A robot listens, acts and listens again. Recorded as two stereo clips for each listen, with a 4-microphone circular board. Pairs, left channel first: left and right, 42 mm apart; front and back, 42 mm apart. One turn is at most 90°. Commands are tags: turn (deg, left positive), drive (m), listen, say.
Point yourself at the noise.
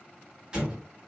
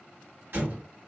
<turn deg="-90"/>
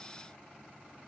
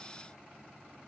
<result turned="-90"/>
<turn deg="-65"/>
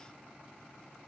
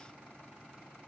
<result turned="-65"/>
<say>Facing where the explosion came from. I can't hear it now.</say>